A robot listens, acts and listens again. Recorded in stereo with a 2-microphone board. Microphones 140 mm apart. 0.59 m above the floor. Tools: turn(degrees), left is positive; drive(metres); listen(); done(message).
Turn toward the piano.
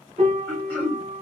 turn(degrees=-65)
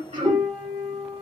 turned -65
turn(degrees=-30)
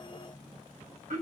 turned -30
listen()
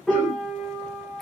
done("Found it: a piano, straight ahead.")